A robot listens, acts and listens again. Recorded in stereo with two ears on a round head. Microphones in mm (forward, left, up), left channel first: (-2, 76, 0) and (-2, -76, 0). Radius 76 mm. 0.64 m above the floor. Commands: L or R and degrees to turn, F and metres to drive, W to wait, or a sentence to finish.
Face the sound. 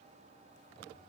W
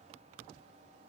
W
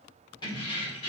L35
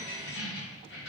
L110
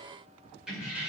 R10
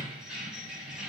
Facing the keys jangling, 1 to 2 m away.